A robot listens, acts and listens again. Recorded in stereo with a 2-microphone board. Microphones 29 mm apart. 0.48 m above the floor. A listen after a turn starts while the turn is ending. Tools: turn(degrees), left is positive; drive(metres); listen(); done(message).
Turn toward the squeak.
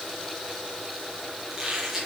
turn(degrees=-30)
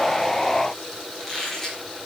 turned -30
turn(degrees=20)
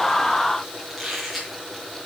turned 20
done("Facing the squeak, over 4 m away.")